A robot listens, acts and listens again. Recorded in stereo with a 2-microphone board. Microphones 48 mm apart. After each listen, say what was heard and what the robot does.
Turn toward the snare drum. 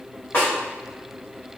The snare drum: about 45° left or 135° left. Turn 45° left.
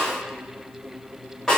So it is at 10° left. Turn 10° left.
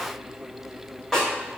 Facing the snare drum, 1 to 2 m away.